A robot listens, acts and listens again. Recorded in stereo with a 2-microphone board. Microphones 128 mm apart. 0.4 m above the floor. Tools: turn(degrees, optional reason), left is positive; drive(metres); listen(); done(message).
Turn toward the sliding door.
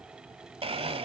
listen()
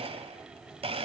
listen()
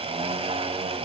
done("I can't make out a sliding door, only a blender.")